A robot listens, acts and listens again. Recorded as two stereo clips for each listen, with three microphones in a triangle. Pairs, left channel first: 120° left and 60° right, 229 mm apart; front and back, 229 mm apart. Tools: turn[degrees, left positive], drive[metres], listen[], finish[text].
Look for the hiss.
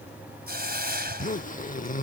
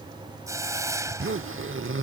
Thought: The hiss: 105° right.
Action: turn[-105]
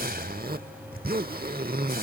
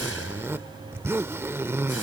Action: listen[]
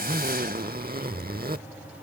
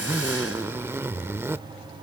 Action: listen[]
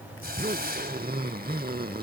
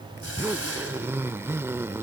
Thought: The hiss is now 15° right.
Action: turn[-15]
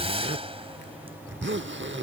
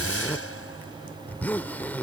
Action: finish[Found it: a hiss, straight ahead.]